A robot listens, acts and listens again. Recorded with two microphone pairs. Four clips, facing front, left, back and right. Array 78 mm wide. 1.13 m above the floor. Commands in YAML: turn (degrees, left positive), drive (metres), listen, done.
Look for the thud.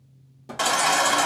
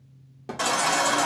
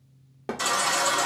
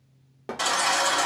turn: -150
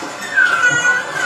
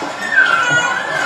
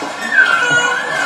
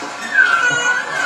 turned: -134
turn: -20
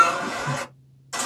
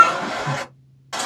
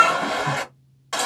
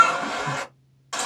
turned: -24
done: "Facing where the thud came from. I can't hear it now."